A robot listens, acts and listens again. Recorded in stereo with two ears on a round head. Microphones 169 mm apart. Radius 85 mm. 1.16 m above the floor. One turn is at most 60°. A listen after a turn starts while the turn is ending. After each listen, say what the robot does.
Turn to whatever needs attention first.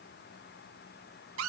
Keep listening.
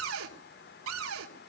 Keep listening.
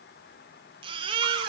Turn 30° right.
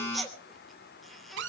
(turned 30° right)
Found it: a baby crying, straight ahead.